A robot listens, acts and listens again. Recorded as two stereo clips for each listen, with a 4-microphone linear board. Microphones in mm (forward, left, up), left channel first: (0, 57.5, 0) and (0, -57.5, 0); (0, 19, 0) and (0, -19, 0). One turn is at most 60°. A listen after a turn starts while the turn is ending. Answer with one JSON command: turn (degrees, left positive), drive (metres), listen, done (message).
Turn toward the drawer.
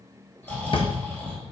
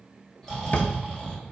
{"turn": 55}
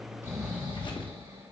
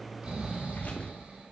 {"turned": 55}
{"listen": true}
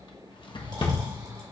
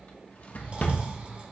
{"turn": 55}
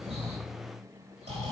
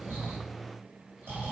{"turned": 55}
{"listen": true}
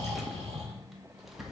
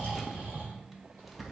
{"done": "Found it: a drawer, straight ahead, under 1 m away."}